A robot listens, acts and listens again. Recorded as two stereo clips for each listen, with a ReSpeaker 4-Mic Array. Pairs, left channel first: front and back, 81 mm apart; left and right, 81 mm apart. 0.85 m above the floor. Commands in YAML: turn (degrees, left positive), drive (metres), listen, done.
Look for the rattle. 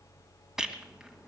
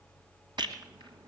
turn: -95
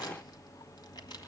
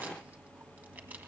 listen: true
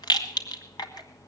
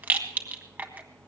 turn: -20
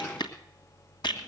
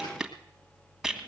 done: "Facing the rattle, 1 to 2 m away."